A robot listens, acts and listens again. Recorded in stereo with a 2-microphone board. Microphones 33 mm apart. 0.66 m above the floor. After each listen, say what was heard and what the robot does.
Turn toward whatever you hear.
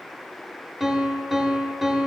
The piano: about 20° right or 160° right. Turn 20° right.
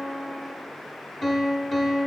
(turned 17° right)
Found it: a piano, straight ahead.